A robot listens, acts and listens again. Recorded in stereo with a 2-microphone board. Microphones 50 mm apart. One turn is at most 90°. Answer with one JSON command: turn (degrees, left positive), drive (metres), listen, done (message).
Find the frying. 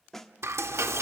{"turn": -75}
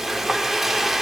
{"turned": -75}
{"done": "Found it: frying, straight ahead, under 1 m away."}